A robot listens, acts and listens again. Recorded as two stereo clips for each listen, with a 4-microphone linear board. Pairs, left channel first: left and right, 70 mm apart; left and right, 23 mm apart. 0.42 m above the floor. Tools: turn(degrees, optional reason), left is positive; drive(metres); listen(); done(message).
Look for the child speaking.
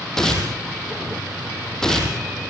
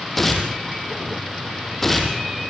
listen()
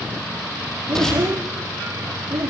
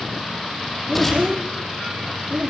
turn(degrees=-40, reason="The child speaking: about 40° right or 140° right.")
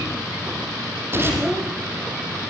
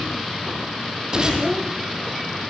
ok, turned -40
done("Facing the child speaking.")